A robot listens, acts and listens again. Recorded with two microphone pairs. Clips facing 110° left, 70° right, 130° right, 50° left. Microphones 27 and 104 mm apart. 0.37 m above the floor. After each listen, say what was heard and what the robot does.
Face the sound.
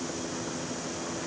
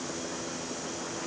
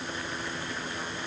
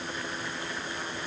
Keep listening.
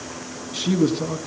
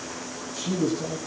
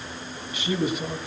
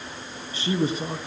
The man speaking: 105° left. Turn 105° left.
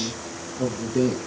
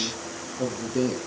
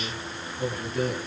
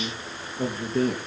Facing the man speaking, over 4 m away.